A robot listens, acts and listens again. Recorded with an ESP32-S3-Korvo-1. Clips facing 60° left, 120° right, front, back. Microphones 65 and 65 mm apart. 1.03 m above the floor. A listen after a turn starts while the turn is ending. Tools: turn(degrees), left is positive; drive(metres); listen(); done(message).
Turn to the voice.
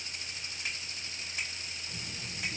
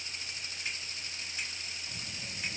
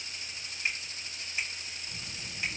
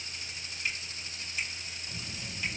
turn(degrees=120)
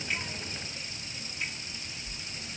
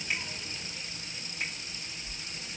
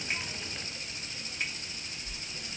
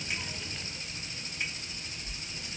turn(degrees=-20)
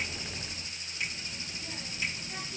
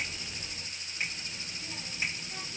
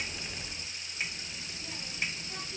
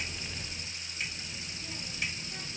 done("Found it: a child speaking, straight ahead, 2 to 4 m away.")